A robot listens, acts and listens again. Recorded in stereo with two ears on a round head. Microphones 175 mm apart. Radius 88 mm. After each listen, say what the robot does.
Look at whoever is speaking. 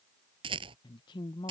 Turn 25° left.
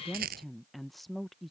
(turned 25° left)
Found it: a woman speaking, straight ahead.